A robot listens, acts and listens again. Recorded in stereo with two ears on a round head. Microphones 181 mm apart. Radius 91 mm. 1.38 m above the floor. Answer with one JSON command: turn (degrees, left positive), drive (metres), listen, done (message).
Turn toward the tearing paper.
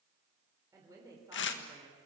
{"turn": 60}
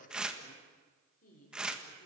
{"done": "Facing the tearing paper."}